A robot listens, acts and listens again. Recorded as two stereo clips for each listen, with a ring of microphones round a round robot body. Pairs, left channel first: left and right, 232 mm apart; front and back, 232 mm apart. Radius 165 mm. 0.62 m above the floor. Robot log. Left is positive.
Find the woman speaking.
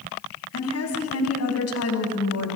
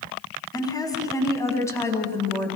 note: The woman speaking: 85° left.
cmd yaw +85
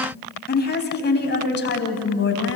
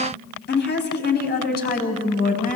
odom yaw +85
note: The woman speaking is now 55° left.
cmd yaw +55
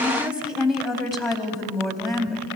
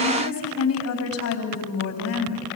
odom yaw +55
end: Found it: a woman speaking, straight ahead.